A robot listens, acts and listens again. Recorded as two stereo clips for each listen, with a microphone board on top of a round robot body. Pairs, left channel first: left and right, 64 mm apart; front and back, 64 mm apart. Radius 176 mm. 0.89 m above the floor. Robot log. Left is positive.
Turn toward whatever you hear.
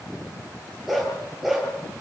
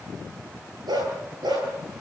note: The dog barking: straight behind.
cmd yaw +180
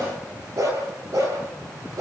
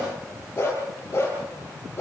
note: The dog barking is now 50° right.
cmd yaw -50
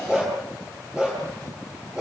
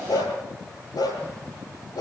note: The dog barking is now 15° right.
cmd yaw -15
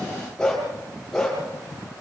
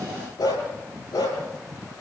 end: Facing the dog barking.